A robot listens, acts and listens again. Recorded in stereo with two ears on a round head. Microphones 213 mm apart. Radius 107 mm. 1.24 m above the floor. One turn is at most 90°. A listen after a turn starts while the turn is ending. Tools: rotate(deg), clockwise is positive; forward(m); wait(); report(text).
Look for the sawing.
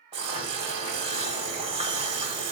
rotate(50)
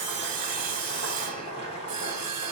rotate(80)
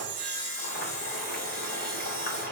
rotate(-30)
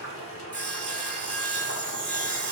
report("Facing the sawing, 1 to 2 m away.")